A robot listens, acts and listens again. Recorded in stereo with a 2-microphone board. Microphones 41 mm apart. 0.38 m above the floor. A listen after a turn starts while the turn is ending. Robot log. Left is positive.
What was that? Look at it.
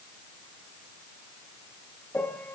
note: The piano: about 55° left or 125° left.
cmd yaw +55
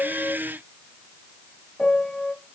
note: So it is at 25° left.
cmd yaw +25
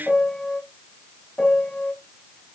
note: The piano is now 25° left.
cmd yaw +25
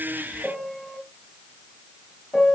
end: Found it: a piano, straight ahead, 1 to 2 m away.